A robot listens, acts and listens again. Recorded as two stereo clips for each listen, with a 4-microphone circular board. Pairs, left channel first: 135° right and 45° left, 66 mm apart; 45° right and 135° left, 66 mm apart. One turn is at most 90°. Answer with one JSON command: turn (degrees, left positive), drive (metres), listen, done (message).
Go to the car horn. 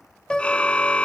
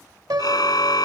{"turn": -65}
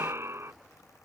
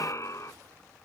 {"drive": 1.0}
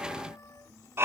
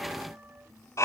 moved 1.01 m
{"drive": 1.0}
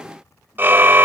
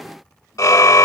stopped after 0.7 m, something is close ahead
{"turn": -10}
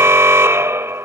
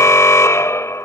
{"done": "I am next to the car horn."}